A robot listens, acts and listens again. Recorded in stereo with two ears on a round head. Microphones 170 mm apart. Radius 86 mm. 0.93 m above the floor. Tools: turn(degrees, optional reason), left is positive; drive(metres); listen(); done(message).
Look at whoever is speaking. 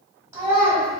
turn(degrees=-15, reason="The child speaking: about 15° right or 165° right.")
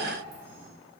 listen()
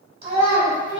turn(degrees=-145, reason="So it is at 145° right.")
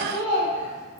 done("Found it: a child speaking, straight ahead.")